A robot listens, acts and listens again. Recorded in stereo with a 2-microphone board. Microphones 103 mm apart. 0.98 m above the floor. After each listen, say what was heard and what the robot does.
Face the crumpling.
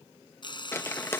The crumpling: about 25° left or 155° left. Turn 25° left.
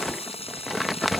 Found it: crumpling, straight ahead.